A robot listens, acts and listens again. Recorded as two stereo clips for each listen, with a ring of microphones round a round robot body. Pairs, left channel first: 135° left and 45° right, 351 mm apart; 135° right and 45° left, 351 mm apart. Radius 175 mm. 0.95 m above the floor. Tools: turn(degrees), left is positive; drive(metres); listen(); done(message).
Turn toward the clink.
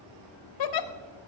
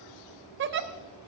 listen()
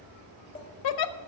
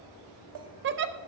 listen()
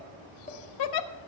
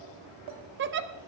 done("I can't make out a clink to turn to.")